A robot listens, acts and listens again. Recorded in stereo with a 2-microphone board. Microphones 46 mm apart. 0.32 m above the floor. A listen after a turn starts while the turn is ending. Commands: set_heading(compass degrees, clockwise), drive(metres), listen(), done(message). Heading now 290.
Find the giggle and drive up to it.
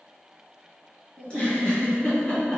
set_heading(265)
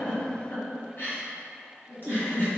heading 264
set_heading(134)
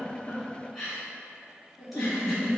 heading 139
drive(1.0)
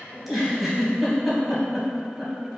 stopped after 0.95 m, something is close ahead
done("I am next to the giggle.")